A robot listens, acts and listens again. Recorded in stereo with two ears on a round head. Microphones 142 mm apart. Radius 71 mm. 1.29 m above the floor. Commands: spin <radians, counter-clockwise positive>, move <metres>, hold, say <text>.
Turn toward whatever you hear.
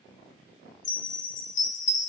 spin 1.57
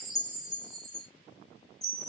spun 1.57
say Facing the chime, 1 to 2 m away.